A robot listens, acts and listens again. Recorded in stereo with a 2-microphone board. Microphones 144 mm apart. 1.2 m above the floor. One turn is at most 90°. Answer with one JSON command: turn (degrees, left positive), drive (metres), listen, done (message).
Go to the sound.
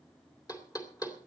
{"turn": 25}
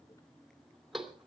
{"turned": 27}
{"drive": 1.0}
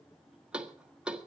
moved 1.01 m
{"drive": 1.0}
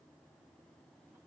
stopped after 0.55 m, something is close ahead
{"listen": true}
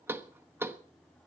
{"turn": -15}
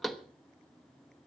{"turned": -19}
{"done": "Arrived at the knocking, straight ahead."}